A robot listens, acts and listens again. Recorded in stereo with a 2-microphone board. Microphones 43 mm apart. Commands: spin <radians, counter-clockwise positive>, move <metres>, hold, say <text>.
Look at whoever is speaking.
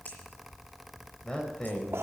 spin 0.35
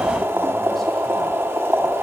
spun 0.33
hold
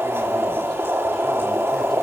hold
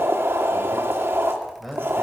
say Found it: a man speaking, straight ahead.